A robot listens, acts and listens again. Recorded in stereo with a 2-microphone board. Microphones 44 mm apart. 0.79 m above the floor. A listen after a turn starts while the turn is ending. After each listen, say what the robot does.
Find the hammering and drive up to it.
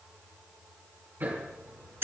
Turn 55° right.
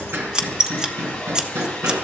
Turn 70° right.
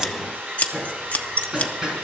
Turn 15° right.
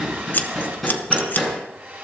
Drive 1.0 m forward.
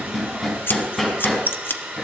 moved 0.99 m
Drive 1.0 m forward.
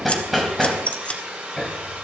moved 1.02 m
Drive 1.0 m forward.
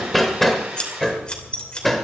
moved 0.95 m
Drive 1.0 m forward.
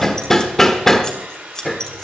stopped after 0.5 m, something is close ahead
Turn 10° left.
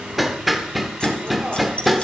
I am next to the hammering.